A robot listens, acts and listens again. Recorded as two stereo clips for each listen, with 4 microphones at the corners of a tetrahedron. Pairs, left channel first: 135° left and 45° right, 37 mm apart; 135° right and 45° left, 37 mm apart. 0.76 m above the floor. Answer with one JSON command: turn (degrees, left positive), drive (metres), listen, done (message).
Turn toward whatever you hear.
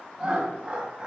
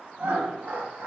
{"turn": 15}
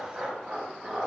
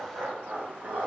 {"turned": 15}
{"turn": 20}
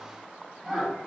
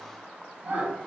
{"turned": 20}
{"turn": 35}
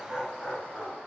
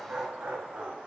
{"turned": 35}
{"turn": 40}
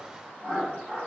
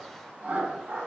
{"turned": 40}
{"turn": 20}
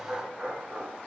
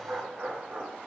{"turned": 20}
{"done": "Found it: laughter, straight ahead."}